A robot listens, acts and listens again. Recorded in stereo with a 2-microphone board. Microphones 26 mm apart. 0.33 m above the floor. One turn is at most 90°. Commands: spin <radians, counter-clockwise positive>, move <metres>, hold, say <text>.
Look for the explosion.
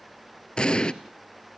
spin 0.61
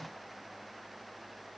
hold
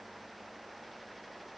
say I heard an explosion, but can't make it out now. It was about straight ahead or 110° left.